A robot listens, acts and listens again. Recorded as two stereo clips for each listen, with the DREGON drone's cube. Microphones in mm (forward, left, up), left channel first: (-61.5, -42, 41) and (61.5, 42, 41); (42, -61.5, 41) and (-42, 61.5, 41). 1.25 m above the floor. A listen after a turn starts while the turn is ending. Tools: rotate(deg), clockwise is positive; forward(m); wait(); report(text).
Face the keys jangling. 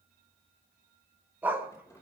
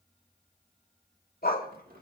rotate(-145)
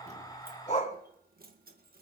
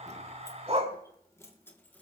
rotate(-20)
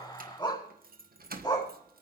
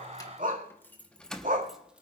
rotate(-30)
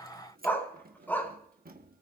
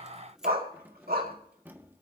rotate(-45)
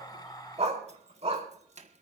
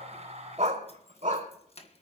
rotate(10)
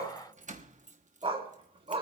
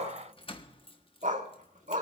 report("Facing the keys jangling, 1 to 2 m away.")